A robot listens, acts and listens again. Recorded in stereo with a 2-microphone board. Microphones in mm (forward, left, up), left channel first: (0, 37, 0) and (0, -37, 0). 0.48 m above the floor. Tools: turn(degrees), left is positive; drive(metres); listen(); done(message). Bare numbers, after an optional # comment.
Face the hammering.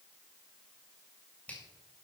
listen()
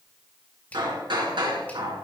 turn(-90)
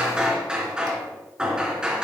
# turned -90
# So it is at 10° right.
turn(-10)
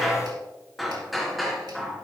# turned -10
done("Facing the hammering, 2 to 4 m away.")